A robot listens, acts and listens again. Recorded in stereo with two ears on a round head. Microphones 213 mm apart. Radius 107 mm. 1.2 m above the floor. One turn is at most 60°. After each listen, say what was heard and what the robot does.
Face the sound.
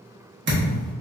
The thud: about 50° right or 130° right. Turn 50° right.
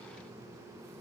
Keep listening.
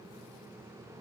I heard a thud, but can't make it out now. It was about straight ahead or 80° right.